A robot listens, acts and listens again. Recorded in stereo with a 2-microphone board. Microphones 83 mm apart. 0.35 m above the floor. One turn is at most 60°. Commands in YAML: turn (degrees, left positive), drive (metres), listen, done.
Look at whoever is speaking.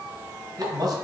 turn: -55
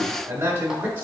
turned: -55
turn: -25
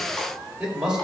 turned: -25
turn: -10
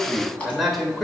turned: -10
done: "Facing the man speaking, 1 to 2 m away."